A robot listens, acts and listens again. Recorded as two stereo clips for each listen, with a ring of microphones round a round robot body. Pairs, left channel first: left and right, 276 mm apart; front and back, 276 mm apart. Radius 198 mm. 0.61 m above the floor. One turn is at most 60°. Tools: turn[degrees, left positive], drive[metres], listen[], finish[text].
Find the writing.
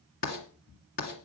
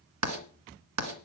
Thought: The writing: 160° left.
Action: turn[60]
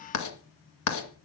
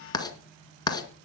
Thought: The writing is now 75° left.
Action: turn[60]
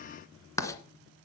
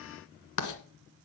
Thought: The writing is now 10° left.
Action: turn[10]
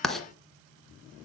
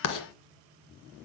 Action: finish[Facing the writing.]